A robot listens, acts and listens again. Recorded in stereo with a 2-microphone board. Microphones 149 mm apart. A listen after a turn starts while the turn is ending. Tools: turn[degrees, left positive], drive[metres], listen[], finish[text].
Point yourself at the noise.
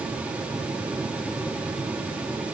Action: listen[]
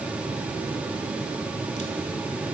Action: listen[]
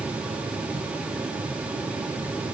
Action: finish[I can't make out anything.]